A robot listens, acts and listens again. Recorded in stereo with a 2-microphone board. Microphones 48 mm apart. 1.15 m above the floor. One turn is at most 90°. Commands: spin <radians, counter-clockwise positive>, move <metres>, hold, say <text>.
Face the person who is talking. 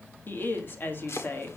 spin 0.87
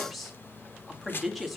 say Found it: a woman speaking, straight ahead, 2 to 4 m away.